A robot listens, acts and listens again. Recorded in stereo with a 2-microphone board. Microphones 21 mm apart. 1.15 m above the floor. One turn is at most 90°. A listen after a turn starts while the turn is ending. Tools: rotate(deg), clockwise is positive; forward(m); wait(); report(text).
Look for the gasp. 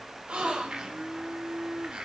rotate(90)
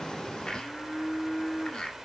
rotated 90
report("Facing where the gasp came from. I can't hear it now.")